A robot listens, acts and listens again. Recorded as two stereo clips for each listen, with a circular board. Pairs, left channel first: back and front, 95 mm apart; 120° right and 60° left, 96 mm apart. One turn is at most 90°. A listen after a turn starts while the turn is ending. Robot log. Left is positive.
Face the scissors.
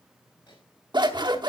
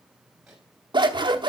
note: The scissors: 30° left.
cmd yaw +30
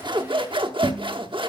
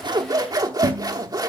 note: The scissors is now 15° left.
cmd yaw +15
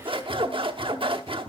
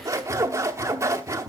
end: Found it: scissors, straight ahead.